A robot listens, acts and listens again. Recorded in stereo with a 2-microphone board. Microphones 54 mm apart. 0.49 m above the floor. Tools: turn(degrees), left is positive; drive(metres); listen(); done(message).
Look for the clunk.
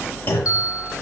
turn(degrees=45)
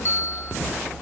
listen()
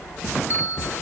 done("I heard a clunk, but can't make it out now. It was about straight ahead or 90° left.")